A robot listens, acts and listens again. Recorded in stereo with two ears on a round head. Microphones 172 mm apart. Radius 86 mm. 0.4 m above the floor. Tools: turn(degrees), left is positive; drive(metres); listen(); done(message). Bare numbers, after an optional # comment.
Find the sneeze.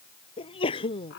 # The sneeze: about 30° left or 150° left.
turn(30)
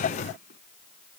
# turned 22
listen()
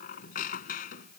done("I heard a sneeze, but can't make it out now. It was about 5° left or 130° left.")